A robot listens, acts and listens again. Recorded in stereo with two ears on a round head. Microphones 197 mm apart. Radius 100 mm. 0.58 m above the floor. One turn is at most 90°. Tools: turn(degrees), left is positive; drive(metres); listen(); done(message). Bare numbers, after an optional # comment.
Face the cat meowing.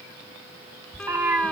turn(-30)
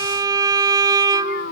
# So it is at 45° left.
turn(45)
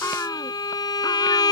# The cat meowing is now 10° left.
turn(10)
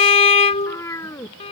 # The cat meowing is now 15° left.
turn(15)
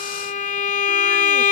listen()
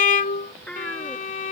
done("Facing the cat meowing.")